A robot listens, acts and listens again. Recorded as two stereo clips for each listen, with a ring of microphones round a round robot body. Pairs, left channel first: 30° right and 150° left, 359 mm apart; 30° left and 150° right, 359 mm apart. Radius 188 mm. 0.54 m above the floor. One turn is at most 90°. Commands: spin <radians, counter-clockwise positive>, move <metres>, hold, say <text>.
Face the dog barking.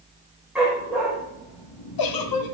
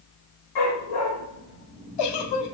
spin 1.13
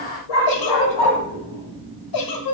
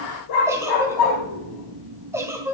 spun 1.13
say Found it: a dog barking, straight ahead.